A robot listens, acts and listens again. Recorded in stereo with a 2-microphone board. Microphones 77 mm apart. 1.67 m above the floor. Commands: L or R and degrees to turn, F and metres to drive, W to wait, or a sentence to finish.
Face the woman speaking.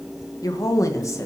L40
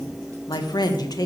L125
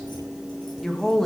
Facing the woman speaking.